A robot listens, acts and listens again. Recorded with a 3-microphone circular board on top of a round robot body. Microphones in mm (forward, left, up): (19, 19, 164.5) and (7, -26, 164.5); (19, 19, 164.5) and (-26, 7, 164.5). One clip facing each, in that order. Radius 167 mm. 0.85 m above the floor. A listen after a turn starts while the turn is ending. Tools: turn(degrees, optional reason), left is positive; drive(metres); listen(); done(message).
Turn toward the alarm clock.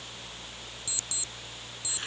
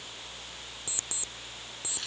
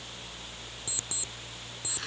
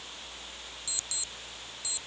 turn(degrees=-50, reason="The alarm clock: 50° right.")
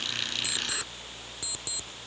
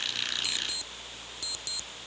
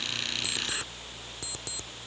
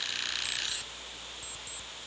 done("Found it: an alarm clock, straight ahead.")